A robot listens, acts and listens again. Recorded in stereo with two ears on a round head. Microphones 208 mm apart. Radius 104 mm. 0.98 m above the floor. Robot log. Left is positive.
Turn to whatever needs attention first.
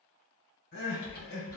note: The crying: about 55° left or 125° left.
cmd yaw +55
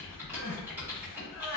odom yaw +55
note: So it is at 55° left.
cmd yaw +55
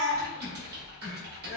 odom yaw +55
note: The crying is now 20° left.
cmd yaw +20
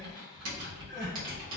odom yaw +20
cmd idle
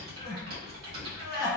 end: Facing the crying, 1 to 2 m away.